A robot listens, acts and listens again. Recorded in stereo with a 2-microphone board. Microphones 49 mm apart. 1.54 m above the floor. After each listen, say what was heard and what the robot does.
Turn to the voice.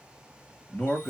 The man speaking: about 25° left or 155° left. Turn 25° left.
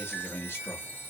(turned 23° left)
So it is at 130° left. Turn 130° left.
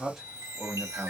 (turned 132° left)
Found it: a man speaking, straight ahead, 1 to 2 m away.